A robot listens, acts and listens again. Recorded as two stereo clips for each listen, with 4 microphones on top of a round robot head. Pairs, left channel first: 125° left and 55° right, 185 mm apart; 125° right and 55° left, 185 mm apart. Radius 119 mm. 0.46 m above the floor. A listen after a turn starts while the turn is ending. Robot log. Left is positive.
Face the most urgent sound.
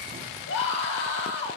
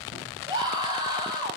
note: The scream: 125° left.
cmd yaw +125
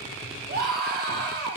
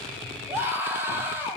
note: The scream is now 20° right.
cmd yaw -20
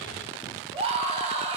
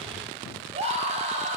end: Facing the scream, over 4 m away.